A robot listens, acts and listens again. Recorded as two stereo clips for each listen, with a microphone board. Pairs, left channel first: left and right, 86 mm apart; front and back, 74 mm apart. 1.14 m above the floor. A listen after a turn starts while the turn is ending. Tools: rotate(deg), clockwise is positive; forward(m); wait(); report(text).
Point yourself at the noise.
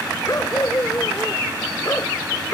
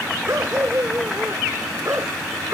rotate(-135)
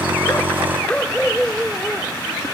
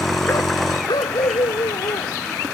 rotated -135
rotate(-15)
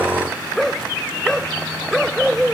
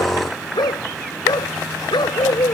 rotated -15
report("Facing the dog barking.")